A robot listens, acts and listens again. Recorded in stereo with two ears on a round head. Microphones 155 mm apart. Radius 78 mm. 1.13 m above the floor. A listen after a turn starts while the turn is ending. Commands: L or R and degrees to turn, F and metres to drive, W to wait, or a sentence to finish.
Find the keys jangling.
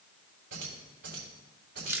R70
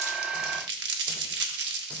W
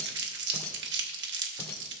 L15
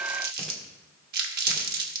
W
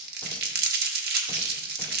W
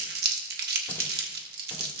I heard keys jangling from this way, but can't make it out now.